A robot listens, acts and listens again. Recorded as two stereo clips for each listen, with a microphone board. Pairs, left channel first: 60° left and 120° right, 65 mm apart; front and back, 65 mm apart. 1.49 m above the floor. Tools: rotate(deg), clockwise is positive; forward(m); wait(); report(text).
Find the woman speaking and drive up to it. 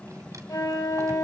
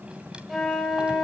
wait()
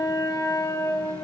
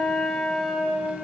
wait()
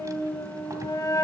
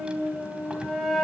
report("I can't make out a woman speaking, only a flute.")